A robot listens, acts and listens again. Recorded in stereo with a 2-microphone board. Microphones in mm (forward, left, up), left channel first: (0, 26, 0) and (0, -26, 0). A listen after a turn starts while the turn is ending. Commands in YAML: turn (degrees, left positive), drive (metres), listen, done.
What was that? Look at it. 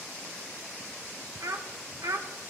turn: -70
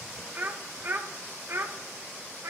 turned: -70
turn: -60
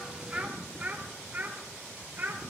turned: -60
turn: -35
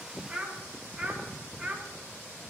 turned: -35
turn: -15
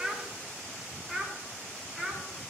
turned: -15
done: "Facing the child speaking, 2 to 4 m away."